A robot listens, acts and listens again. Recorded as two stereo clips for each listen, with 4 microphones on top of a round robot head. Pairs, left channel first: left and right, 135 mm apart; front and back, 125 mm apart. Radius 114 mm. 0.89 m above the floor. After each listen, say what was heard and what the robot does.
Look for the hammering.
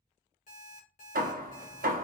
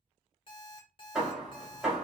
The hammering: 95° right. Turn 95° right.
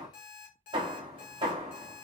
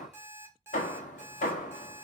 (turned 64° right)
The hammering is now 30° right. Turn 30° right.
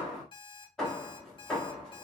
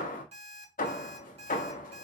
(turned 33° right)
Found it: hammering, straight ahead, 1 to 2 m away.